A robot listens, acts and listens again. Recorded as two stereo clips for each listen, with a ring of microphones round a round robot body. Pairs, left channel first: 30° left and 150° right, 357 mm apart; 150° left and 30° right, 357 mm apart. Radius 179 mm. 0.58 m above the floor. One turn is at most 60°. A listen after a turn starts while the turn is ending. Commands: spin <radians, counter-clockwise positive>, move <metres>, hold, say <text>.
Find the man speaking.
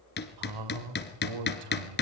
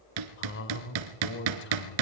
spin -1.05
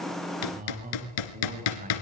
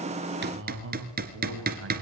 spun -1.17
spin -1.05
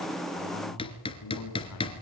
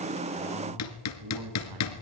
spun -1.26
spin -0.17
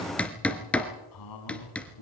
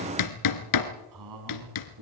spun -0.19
say Found it: a man speaking, straight ahead.